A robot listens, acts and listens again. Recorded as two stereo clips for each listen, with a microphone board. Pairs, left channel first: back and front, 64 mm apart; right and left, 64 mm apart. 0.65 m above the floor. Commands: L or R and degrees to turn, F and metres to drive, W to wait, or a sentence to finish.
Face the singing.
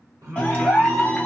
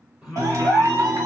L10
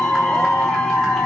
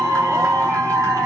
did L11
W
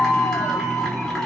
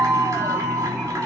W
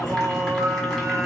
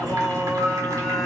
Found it: singing, straight ahead.